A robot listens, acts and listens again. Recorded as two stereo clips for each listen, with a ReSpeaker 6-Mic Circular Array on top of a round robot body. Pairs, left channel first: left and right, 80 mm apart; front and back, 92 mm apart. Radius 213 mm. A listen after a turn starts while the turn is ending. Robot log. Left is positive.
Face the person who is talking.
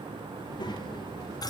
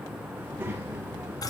note: The child speaking: 110° left.
cmd yaw +110
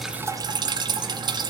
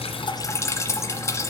cmd idle
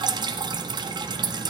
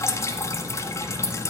cmd idle
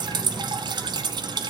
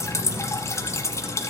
end: I heard a child speaking from this way, but can't make it out now.